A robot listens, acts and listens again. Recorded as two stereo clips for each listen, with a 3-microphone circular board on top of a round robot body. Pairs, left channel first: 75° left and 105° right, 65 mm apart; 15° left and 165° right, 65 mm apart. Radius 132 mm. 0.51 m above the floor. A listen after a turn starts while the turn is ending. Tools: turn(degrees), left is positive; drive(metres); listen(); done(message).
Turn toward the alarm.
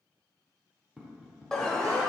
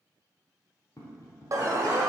turn(degrees=155)
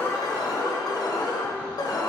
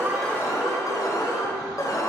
turn(degrees=50)
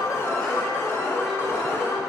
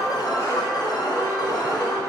turn(degrees=20)
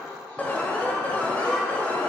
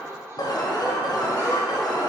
done("Facing the alarm.")